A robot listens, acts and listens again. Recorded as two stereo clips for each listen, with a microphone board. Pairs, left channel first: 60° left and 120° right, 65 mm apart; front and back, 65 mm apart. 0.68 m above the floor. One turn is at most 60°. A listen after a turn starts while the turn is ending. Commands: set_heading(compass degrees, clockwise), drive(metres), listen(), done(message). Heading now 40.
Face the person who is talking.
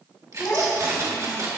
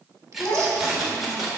set_heading(5)
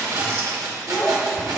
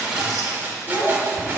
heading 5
set_heading(355)
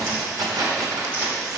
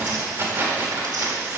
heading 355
listen()
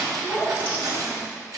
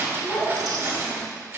done("Facing the child speaking, 2 to 4 m away.")